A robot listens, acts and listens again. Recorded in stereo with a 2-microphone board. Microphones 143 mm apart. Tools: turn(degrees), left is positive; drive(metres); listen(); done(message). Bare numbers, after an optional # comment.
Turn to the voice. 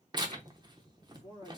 # The man speaking: about 25° left or 155° left.
turn(25)
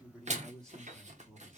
done("Found it: a man speaking, straight ahead, 2 to 4 m away.")